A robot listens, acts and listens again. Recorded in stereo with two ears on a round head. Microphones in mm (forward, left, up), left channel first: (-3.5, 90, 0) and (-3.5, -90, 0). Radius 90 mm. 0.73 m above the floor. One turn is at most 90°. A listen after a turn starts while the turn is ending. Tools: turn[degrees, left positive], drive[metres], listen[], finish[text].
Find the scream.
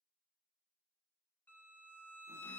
Action: listen[]
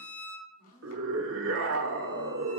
Action: turn[-90]
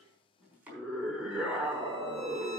Action: finish[Found it: a scream, straight ahead, 1 to 2 m away.]